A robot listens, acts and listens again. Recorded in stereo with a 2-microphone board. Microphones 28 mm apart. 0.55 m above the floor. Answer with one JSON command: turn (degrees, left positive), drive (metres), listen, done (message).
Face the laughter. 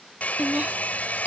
{"turn": -60}
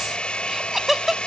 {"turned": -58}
{"turn": -15}
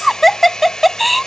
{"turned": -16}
{"done": "Found it: laughter, straight ahead."}